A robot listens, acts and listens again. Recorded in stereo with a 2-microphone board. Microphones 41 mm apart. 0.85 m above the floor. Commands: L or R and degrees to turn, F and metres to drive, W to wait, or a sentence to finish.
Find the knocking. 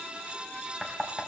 R30
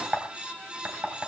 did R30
R135
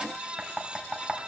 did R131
Facing the knocking.